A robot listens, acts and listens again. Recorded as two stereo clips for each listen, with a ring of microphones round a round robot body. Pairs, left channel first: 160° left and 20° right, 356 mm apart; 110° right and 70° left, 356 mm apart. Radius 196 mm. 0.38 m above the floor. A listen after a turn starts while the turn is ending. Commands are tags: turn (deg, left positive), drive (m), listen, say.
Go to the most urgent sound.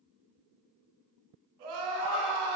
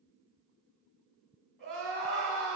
<turn deg="-25"/>
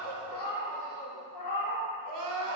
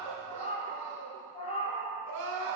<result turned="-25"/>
<turn deg="10"/>
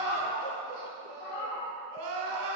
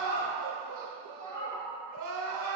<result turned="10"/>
<drive m="1.0"/>
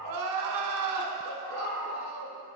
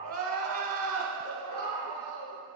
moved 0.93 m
<drive m="1.0"/>
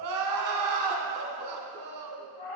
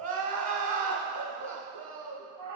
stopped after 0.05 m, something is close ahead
<say>Arrived at the crying, straight ahead.</say>